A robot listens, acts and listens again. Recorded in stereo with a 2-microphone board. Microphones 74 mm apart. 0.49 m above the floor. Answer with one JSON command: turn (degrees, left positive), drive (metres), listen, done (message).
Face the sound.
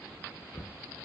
{"turn": 90}
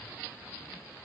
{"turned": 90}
{"listen": true}
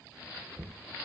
{"turn": -15}
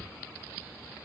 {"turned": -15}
{"listen": true}
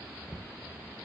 {"done": "Facing the knocking."}